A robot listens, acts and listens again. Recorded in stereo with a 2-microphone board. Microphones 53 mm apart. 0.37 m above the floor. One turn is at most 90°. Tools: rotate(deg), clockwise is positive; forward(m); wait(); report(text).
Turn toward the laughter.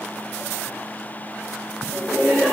rotate(-30)
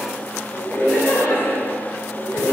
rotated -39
rotate(-90)
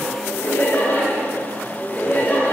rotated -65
rotate(-35)
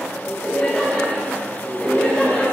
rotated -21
rotate(-15)
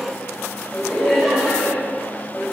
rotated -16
report("Found it: laughter, straight ahead, 2 to 4 m away.")